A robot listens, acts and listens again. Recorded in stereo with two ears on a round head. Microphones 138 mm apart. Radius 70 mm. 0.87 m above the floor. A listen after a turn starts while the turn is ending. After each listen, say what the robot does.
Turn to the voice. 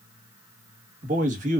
Turn 55° right.
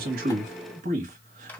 Turn 60° right.
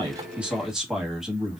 Found it: a man speaking, straight ahead, 1 to 2 m away.